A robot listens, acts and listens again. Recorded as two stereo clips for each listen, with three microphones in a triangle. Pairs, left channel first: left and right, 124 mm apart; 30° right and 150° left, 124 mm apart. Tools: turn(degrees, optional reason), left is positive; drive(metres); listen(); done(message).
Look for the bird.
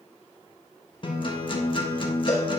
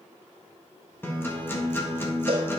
listen()
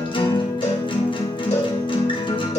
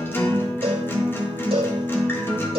listen()
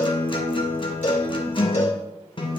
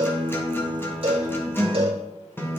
done("I can't make out a bird to turn to.")